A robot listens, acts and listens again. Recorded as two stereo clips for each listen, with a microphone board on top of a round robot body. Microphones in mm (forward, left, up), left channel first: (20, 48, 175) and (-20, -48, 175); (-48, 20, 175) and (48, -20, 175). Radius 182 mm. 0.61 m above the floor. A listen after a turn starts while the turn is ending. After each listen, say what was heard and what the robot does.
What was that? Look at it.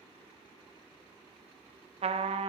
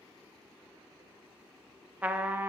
The trumpet: 100° right. Turn 100° right.
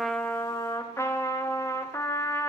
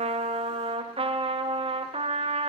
Found it: a trumpet, straight ahead, under 1 m away.